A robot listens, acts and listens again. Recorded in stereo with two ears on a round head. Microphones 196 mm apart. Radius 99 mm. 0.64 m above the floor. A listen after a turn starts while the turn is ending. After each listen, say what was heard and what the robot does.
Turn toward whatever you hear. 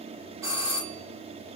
Turn 30° right.
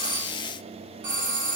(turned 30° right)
So it is at 135° right. Turn 135° right.
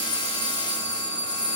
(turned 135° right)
The doorbell is now 35° right. Turn 35° right.
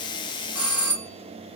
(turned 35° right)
The doorbell is now 10° right. Turn 10° right.
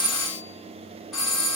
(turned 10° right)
Facing the doorbell.